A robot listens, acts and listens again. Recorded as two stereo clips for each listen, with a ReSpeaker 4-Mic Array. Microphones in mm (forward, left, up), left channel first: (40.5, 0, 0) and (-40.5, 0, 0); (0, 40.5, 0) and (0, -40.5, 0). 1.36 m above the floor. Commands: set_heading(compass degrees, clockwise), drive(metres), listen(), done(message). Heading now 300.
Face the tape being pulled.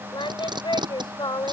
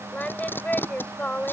set_heading(145)
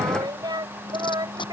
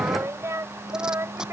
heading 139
set_heading(149)
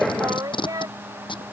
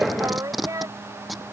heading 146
done("Found it: tape being pulled, straight ahead.")